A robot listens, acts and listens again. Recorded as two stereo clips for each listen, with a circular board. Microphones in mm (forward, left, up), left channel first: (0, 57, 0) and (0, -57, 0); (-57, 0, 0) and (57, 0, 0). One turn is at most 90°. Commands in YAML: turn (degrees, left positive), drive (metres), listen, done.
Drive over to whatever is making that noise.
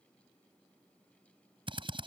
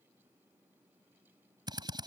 turn: -50
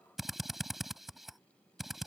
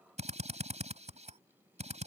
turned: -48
drive: 1.0
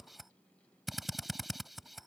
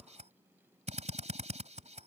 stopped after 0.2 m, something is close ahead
done: "Something is in my way. I am facing the drill but have not reached it."